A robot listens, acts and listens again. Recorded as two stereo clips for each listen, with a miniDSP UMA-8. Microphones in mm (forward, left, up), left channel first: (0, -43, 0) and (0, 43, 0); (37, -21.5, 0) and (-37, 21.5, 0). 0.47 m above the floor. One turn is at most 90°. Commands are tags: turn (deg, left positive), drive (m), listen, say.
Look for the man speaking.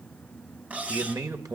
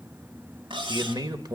<turn deg="90"/>
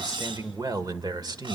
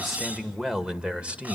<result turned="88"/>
<turn deg="80"/>
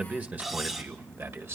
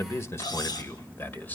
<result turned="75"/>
<turn deg="35"/>
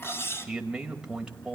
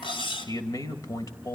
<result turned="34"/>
<turn deg="10"/>
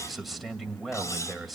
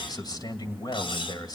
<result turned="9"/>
<say>Facing the man speaking, 2 to 4 m away.</say>